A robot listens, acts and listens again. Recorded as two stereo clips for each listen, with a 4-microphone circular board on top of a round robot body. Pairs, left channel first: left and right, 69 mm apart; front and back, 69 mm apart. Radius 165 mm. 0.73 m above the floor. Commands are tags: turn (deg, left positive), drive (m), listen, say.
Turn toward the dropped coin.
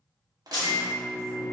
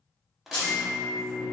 <turn deg="65"/>
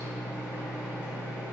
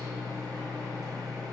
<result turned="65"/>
<say>Facing where the dropped coin came from. I can't hear it now.</say>